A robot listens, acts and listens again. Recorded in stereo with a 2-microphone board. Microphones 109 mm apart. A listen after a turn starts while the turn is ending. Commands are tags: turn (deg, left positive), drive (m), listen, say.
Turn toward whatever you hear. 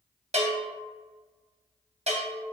<turn deg="-90"/>
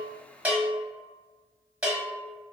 <turn deg="-10"/>
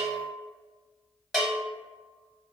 <say>Found it: a bell, straight ahead.</say>